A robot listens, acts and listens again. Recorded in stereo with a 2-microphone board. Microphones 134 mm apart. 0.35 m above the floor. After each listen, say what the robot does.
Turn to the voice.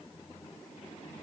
Keep listening.
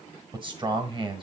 Turn 35° right.
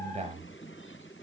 Turn 105° right.
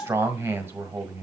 Turn 20° right.
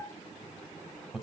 Found it: a man speaking, straight ahead, 1 to 2 m away.